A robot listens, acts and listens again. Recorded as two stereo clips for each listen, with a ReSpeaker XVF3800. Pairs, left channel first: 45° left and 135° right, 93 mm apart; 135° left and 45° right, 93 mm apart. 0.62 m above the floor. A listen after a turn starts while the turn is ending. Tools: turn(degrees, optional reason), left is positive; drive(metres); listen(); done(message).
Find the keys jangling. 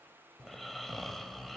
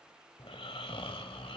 listen()
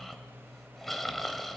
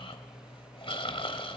listen()
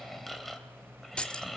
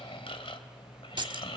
turn(degrees=-30, reason="The keys jangling: 30° right.")
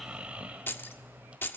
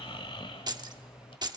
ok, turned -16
turn(degrees=-15, reason="The keys jangling is now 15° right.")
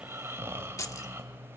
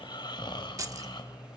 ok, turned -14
done("Facing the keys jangling.")